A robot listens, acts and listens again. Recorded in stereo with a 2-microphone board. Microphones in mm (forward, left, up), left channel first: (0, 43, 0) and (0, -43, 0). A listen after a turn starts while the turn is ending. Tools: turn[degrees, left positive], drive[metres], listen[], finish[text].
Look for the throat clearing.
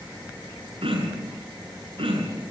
Action: turn[-90]
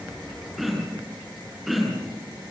Action: finish[Facing the throat clearing, over 4 m away.]